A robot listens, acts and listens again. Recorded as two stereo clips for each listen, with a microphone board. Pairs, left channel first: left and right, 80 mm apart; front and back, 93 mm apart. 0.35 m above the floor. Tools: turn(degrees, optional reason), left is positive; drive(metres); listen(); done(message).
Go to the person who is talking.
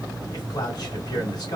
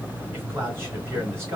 turn(degrees=120, reason="The man speaking: 120° left.")
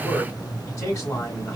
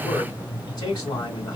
turn(degrees=45, reason="The man speaking is now 45° left.")
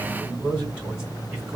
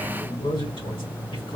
turn(degrees=-15, reason="The man speaking is now 15° right.")
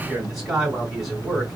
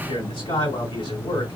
drive(metres=1.0)
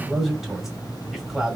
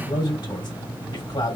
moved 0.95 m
drive(metres=1.0)
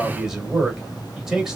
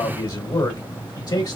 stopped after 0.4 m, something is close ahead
turn(degrees=-10, reason="The man speaking is now 10° right.")
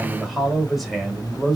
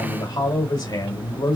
done("Arrived at the man speaking, straight ahead.")